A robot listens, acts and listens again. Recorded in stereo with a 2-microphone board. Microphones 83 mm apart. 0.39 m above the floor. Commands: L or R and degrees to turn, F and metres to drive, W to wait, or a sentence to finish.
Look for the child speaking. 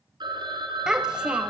R30
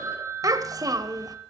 R130
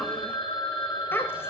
L30
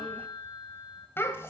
L30
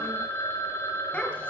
L15
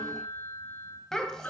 Facing the child speaking, 1 to 2 m away.